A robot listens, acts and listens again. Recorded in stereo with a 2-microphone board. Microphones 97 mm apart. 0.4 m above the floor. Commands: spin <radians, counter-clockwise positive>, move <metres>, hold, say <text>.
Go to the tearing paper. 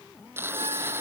spin -0.44
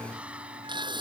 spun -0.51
spin -2.18
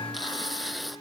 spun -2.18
move 1.0
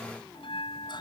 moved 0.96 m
hold
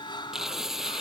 move 1.0
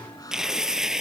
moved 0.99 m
move 1.0
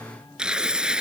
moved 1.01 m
spin -0.17
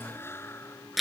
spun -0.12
move 1.0
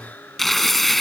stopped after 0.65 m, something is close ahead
say Arrived at the tearing paper, straight ahead.